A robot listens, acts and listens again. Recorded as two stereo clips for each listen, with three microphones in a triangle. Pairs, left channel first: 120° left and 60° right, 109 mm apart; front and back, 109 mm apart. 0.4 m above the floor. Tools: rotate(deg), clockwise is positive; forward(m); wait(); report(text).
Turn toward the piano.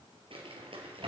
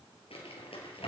wait()
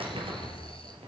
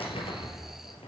wait()
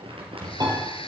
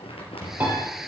rotate(110)
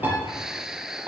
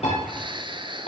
rotate(-15)
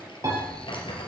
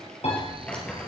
report("Facing the piano, over 4 m away.")